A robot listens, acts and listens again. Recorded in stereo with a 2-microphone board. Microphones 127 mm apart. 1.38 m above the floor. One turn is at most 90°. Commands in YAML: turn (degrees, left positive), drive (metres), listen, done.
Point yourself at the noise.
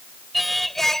turn: 30
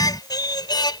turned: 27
turn: 90
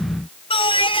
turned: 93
turn: 45
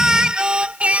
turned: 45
turn: -10
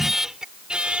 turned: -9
turn: -10
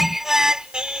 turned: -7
turn: -10
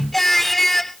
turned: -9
done: "Found it: singing, straight ahead."